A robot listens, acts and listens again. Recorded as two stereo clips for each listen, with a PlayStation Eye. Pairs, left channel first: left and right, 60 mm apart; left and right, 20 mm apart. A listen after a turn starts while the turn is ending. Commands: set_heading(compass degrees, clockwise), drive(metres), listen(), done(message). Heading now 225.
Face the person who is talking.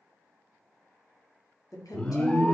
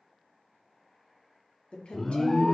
set_heading(135)
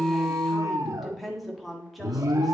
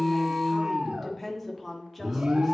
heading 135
done("Facing the woman speaking, 1 to 2 m away.")